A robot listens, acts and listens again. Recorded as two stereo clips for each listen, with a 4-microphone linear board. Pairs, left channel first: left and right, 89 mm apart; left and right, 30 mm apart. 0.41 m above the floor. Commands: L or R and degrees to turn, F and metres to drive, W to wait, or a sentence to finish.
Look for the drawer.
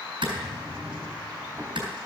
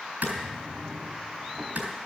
R30
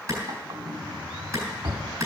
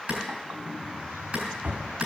R120
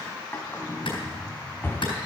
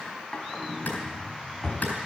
L25
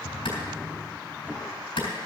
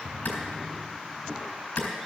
Facing the drawer.